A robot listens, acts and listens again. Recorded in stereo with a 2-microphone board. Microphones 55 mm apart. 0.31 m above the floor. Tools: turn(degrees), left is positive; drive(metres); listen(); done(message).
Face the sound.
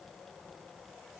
listen()
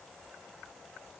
listen()
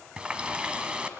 turn(degrees=-20)
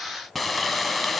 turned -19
done("Facing the running tap, 1 to 2 m away.")